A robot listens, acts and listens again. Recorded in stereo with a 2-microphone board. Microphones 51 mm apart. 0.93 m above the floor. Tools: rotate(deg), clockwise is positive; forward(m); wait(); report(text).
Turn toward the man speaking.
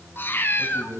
rotate(50)
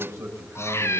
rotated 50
rotate(80)
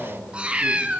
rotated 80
rotate(-30)
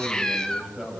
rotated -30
rotate(10)
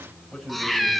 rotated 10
report("Found it: a man speaking, straight ahead.")